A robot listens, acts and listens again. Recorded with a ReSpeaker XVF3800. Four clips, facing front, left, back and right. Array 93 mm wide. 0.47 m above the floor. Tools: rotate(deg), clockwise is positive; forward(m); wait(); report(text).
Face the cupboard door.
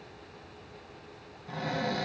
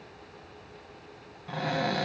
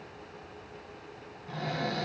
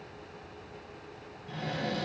rotate(-85)
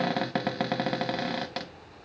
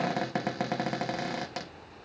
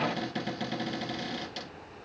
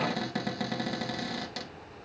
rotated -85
rotate(-25)
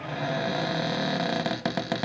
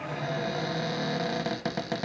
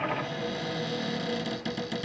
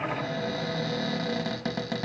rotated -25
report("Facing the cupboard door.")